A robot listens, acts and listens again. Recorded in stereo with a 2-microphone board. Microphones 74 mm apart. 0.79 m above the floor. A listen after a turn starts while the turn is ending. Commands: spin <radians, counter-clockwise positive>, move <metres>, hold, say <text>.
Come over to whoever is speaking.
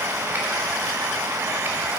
hold
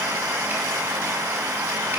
hold
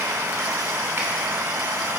say I can't make out anyone speaking.